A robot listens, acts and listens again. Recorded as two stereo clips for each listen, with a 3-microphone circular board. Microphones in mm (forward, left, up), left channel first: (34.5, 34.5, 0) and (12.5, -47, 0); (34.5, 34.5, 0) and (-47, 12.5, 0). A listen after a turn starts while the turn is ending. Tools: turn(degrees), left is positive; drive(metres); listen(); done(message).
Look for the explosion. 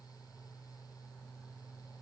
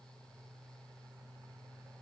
listen()
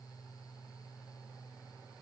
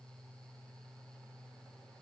listen()
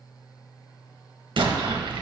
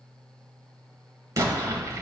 turn(degrees=-115)
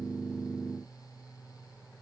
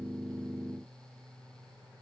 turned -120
done("I heard an explosion from this way, but can't make it out now.")